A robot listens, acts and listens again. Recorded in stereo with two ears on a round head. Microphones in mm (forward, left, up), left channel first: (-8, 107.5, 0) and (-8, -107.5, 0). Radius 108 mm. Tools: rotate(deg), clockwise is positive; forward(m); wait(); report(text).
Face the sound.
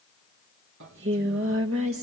rotate(60)
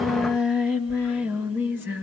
rotate(10)
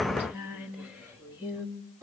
rotate(10)
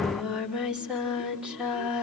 report("Found it: singing, straight ahead.")